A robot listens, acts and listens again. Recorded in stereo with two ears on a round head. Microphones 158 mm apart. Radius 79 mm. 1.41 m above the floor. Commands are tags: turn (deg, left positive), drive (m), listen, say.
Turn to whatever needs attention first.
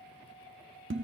<listen/>
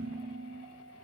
<listen/>
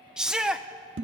<turn deg="-30"/>
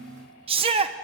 <turn deg="-145"/>
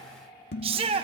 <turn deg="-30"/>
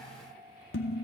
<listen/>
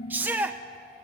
<turn deg="-10"/>
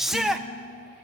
<say>Facing the shout.</say>